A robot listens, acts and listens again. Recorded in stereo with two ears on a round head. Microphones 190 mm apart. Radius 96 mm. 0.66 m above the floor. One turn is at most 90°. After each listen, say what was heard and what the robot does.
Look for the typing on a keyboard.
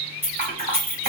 The typing on a keyboard: about 40° right or 140° right. Turn 40° right.
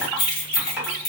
Keep listening.
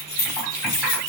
Keep listening.
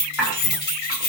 Facing the typing on a keyboard.